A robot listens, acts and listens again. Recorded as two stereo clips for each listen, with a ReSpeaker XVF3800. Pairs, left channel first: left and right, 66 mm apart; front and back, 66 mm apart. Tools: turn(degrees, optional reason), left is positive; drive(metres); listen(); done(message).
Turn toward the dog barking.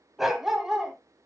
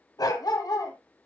done("Facing the dog barking, 1 to 2 m away.")